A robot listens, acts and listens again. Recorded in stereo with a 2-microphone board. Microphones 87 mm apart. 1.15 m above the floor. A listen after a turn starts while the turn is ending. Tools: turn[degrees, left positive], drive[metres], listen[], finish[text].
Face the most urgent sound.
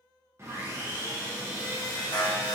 Thought: The alarm: about 50° left or 130° left.
Action: turn[50]
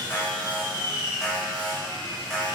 Action: finish[Found it: an alarm, straight ahead.]